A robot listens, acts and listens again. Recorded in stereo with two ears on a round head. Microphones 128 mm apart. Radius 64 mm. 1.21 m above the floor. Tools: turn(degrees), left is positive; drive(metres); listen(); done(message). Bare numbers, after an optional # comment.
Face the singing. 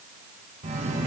# The singing: about 50° right or 130° right.
turn(-50)
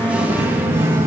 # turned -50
# So it is at 20° right.
turn(-20)
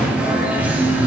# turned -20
# The singing is now 15° right.
turn(-15)
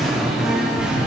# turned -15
done("Facing the singing.")